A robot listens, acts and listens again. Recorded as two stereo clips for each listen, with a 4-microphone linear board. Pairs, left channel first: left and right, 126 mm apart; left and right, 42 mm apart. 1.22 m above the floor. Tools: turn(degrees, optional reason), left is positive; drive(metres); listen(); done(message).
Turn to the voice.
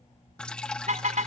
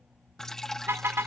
listen()
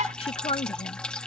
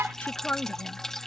turn(degrees=50, reason="The woman speaking: about 50° left or 130° left.")
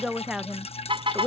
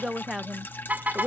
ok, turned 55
done("Found it: a woman speaking, straight ahead.")